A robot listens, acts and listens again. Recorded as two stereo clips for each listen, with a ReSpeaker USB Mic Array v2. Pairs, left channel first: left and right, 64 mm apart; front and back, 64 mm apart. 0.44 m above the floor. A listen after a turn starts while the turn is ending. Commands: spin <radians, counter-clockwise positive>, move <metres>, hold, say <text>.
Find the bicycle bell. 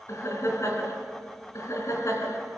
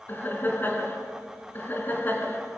hold
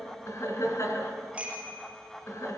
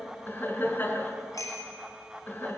spin -0.35
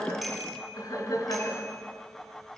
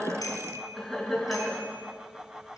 hold
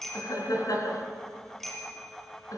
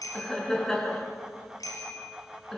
say Found it: a bicycle bell, straight ahead, over 4 m away.